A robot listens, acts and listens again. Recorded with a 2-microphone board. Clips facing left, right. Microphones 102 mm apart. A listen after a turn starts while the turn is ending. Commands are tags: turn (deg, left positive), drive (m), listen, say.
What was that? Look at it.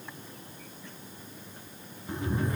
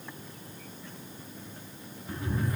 <turn deg="25"/>
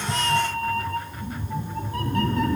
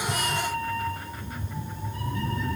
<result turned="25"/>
<turn deg="110"/>
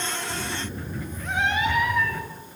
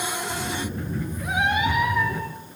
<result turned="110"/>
<turn deg="-15"/>
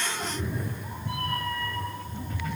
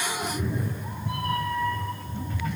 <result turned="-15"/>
<say>Found it: a cat meowing, straight ahead, 2 to 4 m away.</say>